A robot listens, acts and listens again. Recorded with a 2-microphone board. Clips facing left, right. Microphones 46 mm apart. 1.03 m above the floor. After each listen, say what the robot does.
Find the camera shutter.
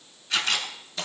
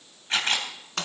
Turn 35° right.
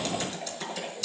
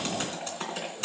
Keep listening.
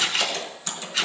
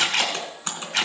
Turn 110° right.
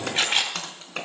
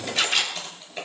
Turn 30° left.
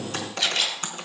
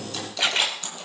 Turn 25° right.
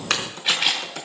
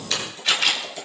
Turn 10° left.
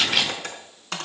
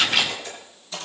Found it: a camera shutter, straight ahead, 2 to 4 m away.